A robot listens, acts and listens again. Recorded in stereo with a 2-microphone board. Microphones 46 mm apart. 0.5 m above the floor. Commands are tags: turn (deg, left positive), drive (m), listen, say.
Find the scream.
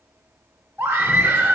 <turn deg="-50"/>
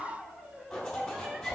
<listen/>
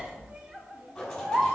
<turn deg="-20"/>
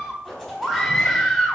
<say>Found it: a scream, straight ahead.</say>